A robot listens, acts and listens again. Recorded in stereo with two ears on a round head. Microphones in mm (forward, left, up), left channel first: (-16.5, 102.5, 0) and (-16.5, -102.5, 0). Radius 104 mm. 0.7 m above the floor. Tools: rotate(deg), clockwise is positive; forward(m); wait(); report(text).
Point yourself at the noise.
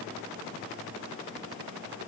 wait()
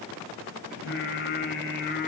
rotate(-50)
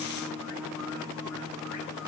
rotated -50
rotate(-75)
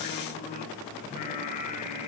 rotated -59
rotate(-35)
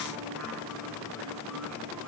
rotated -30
wait()
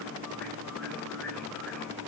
report("Found it: singing, straight ahead, 2 to 4 m away.")